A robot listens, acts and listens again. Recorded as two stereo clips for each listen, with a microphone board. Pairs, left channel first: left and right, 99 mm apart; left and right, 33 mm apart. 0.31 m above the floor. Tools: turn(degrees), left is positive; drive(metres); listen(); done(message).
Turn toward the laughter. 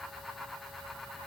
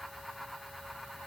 listen()
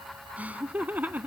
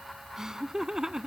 turn(degrees=-20)
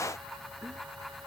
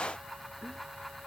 turn(degrees=-30)
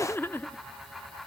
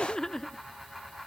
turn(degrees=20)
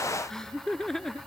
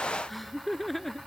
done("Found it: laughter, straight ahead.")